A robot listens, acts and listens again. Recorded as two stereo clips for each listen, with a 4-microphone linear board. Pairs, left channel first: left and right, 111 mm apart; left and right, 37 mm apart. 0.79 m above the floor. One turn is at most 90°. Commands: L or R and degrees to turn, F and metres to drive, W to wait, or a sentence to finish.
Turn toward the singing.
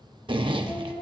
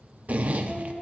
L15
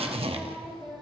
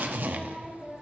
R30
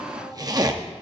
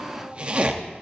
L25
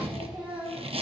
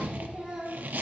R15
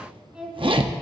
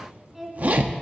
R10
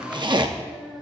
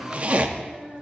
R10
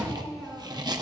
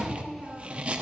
Facing the singing.